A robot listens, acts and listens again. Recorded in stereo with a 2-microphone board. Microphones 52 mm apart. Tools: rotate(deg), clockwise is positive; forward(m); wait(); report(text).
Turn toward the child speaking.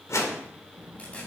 rotate(30)
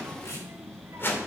rotate(120)
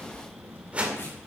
rotate(45)
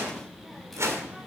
report("Facing the child speaking, 2 to 4 m away.")